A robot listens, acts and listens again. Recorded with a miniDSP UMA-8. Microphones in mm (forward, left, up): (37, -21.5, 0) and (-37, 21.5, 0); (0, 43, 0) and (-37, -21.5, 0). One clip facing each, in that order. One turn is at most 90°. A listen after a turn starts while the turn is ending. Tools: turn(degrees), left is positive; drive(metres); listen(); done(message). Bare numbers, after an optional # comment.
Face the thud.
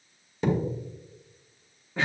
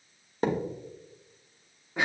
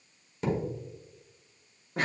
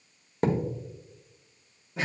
# The thud: 165° right.
turn(-90)
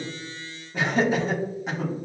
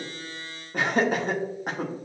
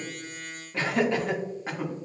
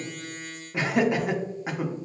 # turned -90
# Nothing new. It was at 75° right.
turn(-75)
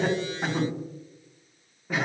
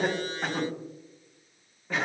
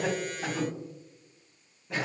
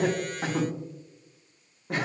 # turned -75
done("Facing where the thud came from. I can't hear it now.")